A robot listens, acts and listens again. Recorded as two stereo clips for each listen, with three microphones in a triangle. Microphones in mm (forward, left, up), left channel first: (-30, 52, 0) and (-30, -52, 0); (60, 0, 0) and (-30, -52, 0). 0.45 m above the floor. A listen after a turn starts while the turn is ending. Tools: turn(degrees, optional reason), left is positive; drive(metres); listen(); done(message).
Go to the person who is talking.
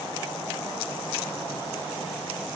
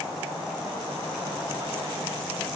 listen()
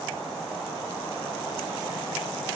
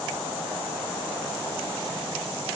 listen()
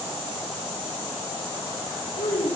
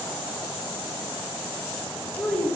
turn(degrees=105, reason="The child speaking: 105° left.")
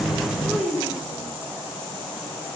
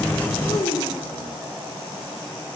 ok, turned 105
drive(metres=1.0)
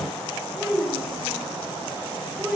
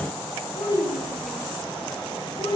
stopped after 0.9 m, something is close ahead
turn(degrees=-10, reason="The child speaking is now 10° right.")
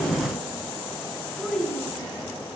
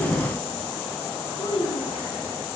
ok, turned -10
done("Something is in my way. I am facing the child speaking but have not reached it.")